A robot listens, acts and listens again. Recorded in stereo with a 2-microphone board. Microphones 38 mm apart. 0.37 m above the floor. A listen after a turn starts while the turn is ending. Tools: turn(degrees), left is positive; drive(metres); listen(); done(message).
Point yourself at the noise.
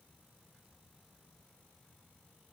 listen()
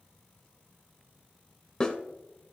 turn(degrees=20)
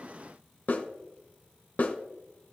turn(degrees=140)
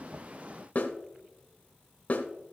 turn(degrees=45)
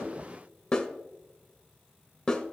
turn(degrees=25)
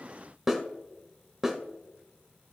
done("Found it: a snare drum, straight ahead, 1 to 2 m away.")